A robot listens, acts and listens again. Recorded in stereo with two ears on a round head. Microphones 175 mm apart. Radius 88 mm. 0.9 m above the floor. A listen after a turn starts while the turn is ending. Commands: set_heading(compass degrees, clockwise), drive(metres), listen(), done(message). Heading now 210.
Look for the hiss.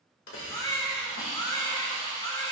set_heading(135)
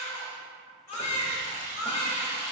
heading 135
set_heading(105)
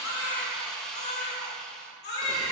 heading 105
done("Found it: a hiss, straight ahead, 2 to 4 m away.")